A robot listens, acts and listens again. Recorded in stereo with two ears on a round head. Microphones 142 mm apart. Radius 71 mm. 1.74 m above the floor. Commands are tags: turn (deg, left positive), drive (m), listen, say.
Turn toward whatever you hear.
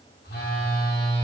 <turn deg="70"/>
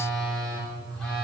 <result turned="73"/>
<say>Found it: a phone buzzing, straight ahead, 2 to 4 m away.</say>